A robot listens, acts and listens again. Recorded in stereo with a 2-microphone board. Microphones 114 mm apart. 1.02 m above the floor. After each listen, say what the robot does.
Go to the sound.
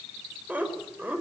Turn 15° right.
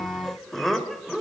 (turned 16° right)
Drive 1.0 m forward.
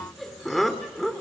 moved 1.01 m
Drive 1.0 m forward.
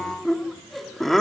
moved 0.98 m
Drive 1.0 m forward.
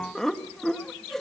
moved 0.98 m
Drive 1.0 m forward.
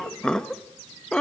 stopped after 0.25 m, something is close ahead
Arrived at the laughter, straight ahead.